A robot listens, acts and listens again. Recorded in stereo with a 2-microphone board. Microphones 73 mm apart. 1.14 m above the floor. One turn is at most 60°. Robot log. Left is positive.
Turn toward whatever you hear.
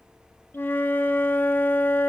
note: The flute: about 30° left or 150° left.
cmd yaw +30
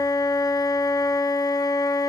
note: So it is at 120° left.
cmd yaw +60
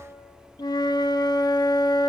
note: The flute is now 70° left.
cmd yaw +60
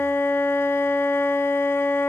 note: The flute is now 35° left.
cmd yaw +35
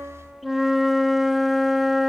end: Found it: a flute, straight ahead, 1 to 2 m away.